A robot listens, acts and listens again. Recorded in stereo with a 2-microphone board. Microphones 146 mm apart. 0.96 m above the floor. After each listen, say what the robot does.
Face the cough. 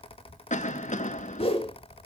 Turn 55° left.
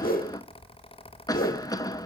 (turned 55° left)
Turn 30° left.
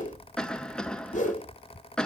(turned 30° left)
Facing the cough, 1 to 2 m away.